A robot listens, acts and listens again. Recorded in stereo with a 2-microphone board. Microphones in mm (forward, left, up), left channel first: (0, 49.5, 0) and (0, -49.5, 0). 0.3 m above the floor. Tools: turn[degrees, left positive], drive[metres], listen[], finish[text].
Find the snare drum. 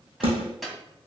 Thought: The snare drum: about 65° right or 115° right.
Action: turn[-65]
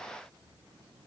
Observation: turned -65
Action: listen[]
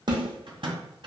Thought: So it is at 50° right.
Action: turn[-50]
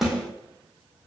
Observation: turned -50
Action: finish[Found it: a snare drum, straight ahead, 2 to 4 m away.]